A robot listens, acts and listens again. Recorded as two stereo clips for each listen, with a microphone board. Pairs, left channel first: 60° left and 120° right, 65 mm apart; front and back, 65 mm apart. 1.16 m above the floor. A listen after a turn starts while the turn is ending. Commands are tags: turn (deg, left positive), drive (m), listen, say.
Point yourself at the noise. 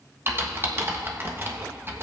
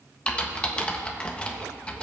<turn deg="-70"/>
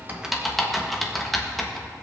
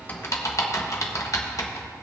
<turn deg="-30"/>
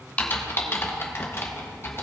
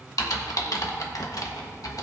<turn deg="15"/>
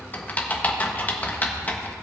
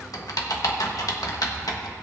<say>Found it: typing on a keyboard, straight ahead, 1 to 2 m away.</say>